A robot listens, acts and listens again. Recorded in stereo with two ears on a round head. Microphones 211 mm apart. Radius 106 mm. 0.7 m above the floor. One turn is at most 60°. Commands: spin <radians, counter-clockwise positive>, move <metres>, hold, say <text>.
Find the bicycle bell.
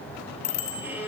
spin 0.52
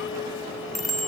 say Facing the bicycle bell, 2 to 4 m away.